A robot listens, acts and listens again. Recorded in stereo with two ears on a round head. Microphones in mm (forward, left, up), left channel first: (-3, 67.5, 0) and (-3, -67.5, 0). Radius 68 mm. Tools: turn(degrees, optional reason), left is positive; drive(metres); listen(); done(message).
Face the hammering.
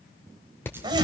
turn(degrees=30)
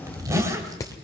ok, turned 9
turn(degrees=20, reason="The hammering: about 20° left or 160° left.")
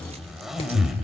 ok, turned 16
listen()
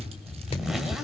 listen()
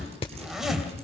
turn(degrees=140, reason="So it is at 140° left.")
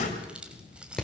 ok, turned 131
done("Found it: hammering, straight ahead, 1 to 2 m away.")